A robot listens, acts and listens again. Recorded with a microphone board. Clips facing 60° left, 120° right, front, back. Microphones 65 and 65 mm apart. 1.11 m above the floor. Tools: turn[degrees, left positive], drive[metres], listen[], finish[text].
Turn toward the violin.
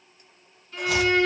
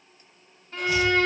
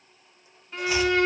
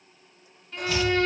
Thought: The violin: 70° right.
Action: turn[-70]
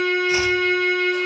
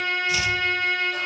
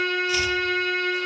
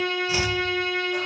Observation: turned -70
Thought: The violin is now 25° right.
Action: turn[-25]
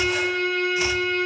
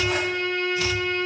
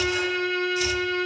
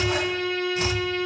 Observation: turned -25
Thought: The violin is now 15° right.
Action: turn[-15]
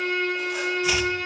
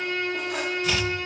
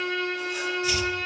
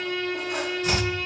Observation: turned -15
Action: finish[Found it: a violin, straight ahead, 2 to 4 m away.]